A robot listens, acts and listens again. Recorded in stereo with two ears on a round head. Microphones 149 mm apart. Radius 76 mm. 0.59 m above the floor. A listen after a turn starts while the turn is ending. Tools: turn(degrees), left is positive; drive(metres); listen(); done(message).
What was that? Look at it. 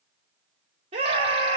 turn(degrees=-35)
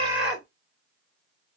done("Found it: a scream, straight ahead.")